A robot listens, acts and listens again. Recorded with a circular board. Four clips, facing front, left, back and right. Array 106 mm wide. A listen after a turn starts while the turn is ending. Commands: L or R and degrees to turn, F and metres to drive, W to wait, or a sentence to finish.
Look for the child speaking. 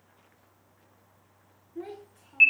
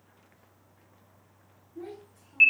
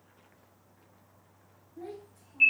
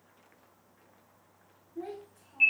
Facing the child speaking.